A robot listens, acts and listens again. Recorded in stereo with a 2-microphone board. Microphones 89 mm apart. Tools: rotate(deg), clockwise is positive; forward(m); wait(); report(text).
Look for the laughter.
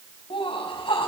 rotate(-65)
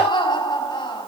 rotate(-55)
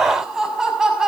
report("Facing the laughter, over 4 m away.")